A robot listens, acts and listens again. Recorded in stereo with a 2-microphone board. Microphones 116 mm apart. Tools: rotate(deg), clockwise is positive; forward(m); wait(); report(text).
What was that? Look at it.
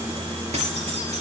rotate(70)
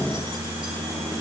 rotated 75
wait()
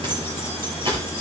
rotate(50)
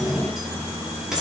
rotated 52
report("Facing the keys jangling.")